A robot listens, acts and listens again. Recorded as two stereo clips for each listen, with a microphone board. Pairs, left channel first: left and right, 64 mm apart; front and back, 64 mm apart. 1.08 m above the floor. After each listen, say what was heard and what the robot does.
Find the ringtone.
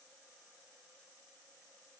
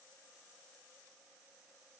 Keep listening.
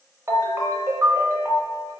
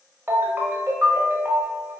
The ringtone: 130° right. Turn 130° right.
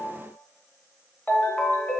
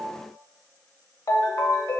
The ringtone is now 25° left. Turn 25° left.
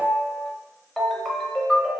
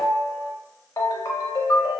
Facing the ringtone, under 1 m away.